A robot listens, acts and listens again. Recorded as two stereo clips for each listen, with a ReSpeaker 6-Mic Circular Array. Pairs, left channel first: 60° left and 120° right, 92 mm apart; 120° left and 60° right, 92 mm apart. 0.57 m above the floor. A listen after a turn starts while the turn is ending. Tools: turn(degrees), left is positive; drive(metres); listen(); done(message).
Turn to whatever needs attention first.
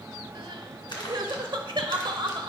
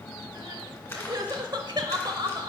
turn(degrees=-95)
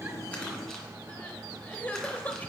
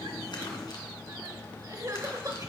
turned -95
turn(degrees=-10)
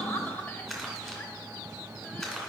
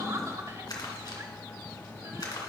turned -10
done("Facing the crying.")